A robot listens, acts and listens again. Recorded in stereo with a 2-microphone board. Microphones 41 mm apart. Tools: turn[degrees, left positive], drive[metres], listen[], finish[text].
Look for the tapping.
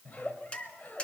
Thought: The tapping: about 25° left or 155° left.
Action: turn[25]
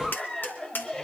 Thought: So it is at 125° left.
Action: turn[125]
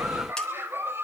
Action: listen[]
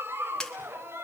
Thought: The tapping is now 15° left.
Action: turn[15]
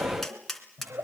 Action: finish[Found it: tapping, straight ahead, 2 to 4 m away.]